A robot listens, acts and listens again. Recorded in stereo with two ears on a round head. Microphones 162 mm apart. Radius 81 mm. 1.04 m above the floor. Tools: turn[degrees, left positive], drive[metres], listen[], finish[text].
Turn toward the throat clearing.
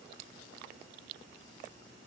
Action: listen[]
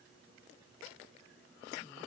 Action: listen[]
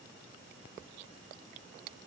Action: finish[I can't make out throat clearing.]